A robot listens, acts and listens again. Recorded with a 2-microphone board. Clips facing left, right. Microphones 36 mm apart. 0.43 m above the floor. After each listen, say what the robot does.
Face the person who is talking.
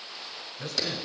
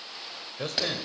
Turn 55° right.
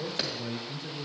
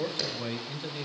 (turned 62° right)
Turn 50° right.
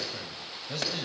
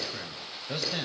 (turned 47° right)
Turn 25° right.
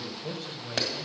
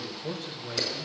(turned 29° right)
Found it: a man speaking, straight ahead.